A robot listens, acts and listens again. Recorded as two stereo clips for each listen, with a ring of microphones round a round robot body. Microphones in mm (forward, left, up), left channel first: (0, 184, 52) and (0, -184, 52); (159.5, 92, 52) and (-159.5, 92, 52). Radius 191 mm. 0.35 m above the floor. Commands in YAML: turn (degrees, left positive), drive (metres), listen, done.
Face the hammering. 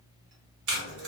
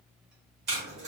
listen: true
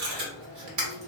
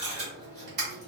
listen: true
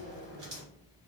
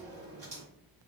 done: "I can't make out hammering, only tape being pulled."